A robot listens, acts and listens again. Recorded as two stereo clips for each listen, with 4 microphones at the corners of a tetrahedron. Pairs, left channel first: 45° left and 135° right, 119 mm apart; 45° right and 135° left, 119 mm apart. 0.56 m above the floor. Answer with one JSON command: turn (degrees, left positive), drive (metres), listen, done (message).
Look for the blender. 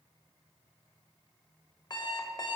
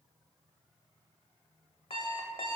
{"listen": true}
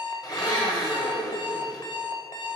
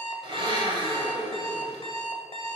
{"turn": 95}
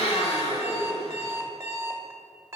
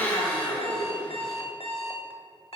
{"turn": 25}
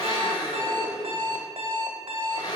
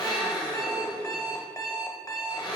{"done": "Found it: a blender, straight ahead."}